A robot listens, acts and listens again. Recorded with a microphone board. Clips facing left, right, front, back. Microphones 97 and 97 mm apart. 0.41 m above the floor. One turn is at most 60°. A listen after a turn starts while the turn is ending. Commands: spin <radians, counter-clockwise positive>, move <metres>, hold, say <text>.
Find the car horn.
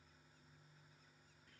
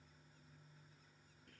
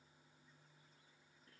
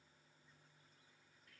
hold
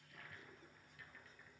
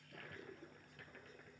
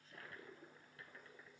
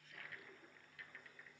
hold
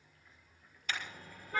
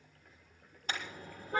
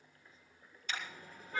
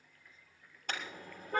spin -1.05
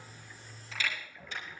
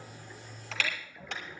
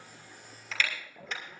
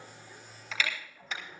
spin -1.05
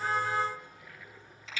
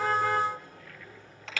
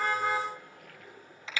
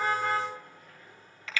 spin -1.05
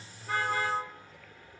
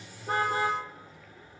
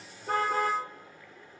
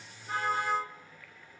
spin -0.26
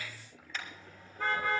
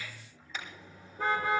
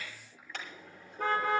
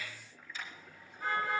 say Found it: a car horn, straight ahead, over 4 m away.